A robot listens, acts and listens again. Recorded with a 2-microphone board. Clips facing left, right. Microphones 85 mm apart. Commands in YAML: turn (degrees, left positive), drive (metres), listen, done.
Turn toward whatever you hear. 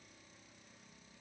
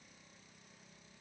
listen: true
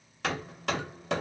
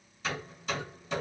turn: 75
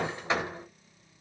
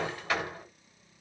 turn: 25
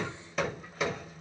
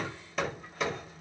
done: "Facing the hammering."